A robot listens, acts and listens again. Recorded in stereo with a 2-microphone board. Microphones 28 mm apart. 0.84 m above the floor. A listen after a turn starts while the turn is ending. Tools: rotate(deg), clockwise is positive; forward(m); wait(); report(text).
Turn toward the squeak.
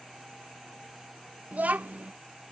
wait()
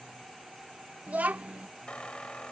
rotate(-45)
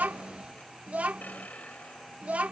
rotate(-95)
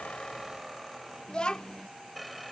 report("Found it: a squeak, straight ahead.")